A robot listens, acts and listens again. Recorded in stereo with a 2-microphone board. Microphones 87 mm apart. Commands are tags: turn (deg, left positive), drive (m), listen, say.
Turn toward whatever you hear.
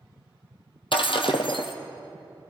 <turn deg="70"/>
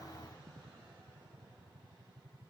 <listen/>
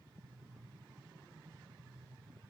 <say>I heard breaking glass, but can't make it out now. It was about straight ahead or 40° left.</say>